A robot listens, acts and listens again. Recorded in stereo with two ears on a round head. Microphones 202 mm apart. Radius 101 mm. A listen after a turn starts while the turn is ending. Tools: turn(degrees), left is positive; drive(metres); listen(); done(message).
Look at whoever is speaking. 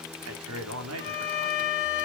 turn(degrees=-65)
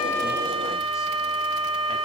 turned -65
listen()
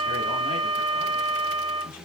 listen()
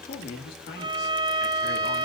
turn(degrees=45)
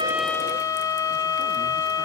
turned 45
listen()
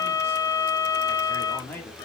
turn(degrees=10)
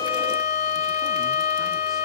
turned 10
listen()
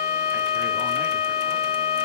listen()
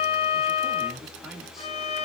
done("Found it: a man speaking, straight ahead, 2 to 4 m away.")